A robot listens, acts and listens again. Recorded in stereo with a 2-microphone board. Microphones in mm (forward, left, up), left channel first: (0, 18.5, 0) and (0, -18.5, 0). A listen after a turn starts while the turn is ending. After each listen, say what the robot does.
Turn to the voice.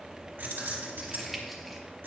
Keep listening.
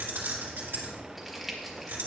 Keep listening.
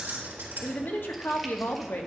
Turn 90° left.
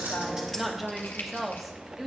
Facing the woman speaking, 1 to 2 m away.